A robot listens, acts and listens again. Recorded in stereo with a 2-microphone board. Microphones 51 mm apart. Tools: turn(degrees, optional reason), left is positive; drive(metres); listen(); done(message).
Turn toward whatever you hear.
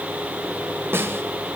turn(degrees=-50, reason="The snare drum: about 50° right or 130° right.")
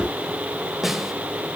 done("Found it: a snare drum, straight ahead, 1 to 2 m away.")